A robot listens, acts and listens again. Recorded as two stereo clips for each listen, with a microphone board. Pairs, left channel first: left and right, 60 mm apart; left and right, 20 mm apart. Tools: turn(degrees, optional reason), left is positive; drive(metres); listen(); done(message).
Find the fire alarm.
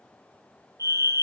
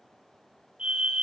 turn(degrees=-65, reason="The fire alarm: about 65° right or 115° right.")
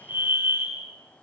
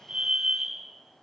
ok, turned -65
turn(degrees=-40, reason="So it is at 40° right.")
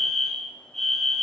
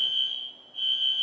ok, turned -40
done("Facing the fire alarm, over 4 m away.")